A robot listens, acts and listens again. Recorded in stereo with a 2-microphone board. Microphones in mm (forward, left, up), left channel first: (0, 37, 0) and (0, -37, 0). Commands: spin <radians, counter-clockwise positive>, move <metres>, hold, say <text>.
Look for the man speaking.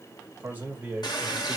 spin -0.35
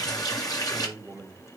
spin -0.44
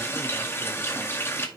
hold
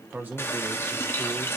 spin -0.35
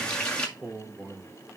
spin -0.44
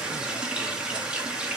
hold
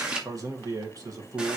spin -2.27
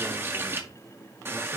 hold
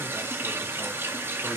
hold
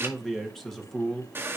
say Facing the man speaking.